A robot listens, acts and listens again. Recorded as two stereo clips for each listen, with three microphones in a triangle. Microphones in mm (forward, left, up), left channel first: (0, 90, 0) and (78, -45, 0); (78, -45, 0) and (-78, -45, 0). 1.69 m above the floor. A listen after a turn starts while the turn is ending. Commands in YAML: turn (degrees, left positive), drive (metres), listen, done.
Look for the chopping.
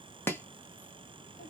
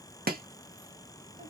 turn: -165
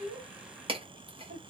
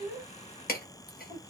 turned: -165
done: "Found it: chopping, straight ahead, under 1 m away."